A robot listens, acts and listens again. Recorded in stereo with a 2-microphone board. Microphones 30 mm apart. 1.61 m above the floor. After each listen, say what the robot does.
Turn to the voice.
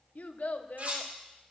Turn 60° left.
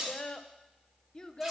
Turn 30° left.
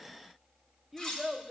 Facing the child speaking.